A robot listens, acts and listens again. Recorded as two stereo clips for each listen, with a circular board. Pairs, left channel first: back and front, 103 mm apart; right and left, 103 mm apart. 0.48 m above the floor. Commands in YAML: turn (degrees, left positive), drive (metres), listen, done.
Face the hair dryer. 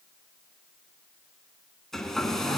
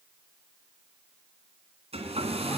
turn: 95
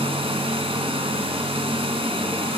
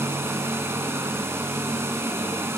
turn: 25
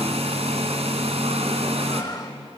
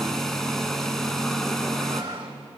done: "Facing the hair dryer, 2 to 4 m away."